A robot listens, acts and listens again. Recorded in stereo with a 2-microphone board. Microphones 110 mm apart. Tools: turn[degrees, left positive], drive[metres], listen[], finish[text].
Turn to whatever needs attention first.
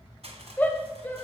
Thought: The shout: about 15° left or 165° left.
Action: turn[15]
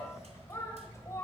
Thought: So it is at 150° left.
Action: turn[150]
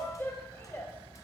Thought: The shout is now 25° left.
Action: turn[25]
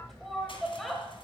Action: finish[Found it: a shout, straight ahead, 1 to 2 m away.]